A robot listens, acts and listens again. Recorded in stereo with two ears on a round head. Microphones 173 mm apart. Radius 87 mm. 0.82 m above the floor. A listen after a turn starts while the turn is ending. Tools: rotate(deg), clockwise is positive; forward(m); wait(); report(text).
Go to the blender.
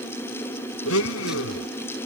rotate(-90)
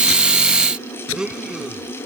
forward(1.0)
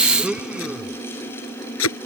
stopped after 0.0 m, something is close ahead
report("Blocked. The blender is further on, straight ahead.")